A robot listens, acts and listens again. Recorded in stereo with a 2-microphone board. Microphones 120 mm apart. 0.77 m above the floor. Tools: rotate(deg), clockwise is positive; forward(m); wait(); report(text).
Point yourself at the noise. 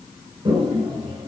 rotate(50)
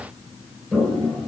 report("Facing the toilet flushing.")